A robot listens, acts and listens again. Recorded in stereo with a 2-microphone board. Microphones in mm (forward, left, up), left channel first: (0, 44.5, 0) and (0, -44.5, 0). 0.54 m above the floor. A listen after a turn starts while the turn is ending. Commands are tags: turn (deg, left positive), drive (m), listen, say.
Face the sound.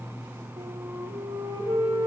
<turn deg="-90"/>
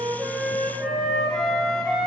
<turn deg="10"/>
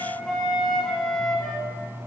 <say>Found it: a flute, straight ahead.</say>